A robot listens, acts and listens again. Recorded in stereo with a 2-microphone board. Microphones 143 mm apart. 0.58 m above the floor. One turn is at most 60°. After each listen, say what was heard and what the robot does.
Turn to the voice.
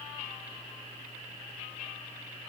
Keep listening.
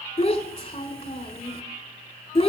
The child speaking: about 45° left or 135° left. Turn 45° left.
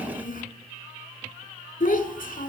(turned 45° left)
So it is at 90° left. Turn 60° left.
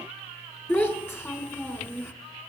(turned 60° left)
The child speaking is now 15° left. Turn 15° left.
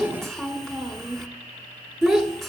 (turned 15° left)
Facing the child speaking, 1 to 2 m away.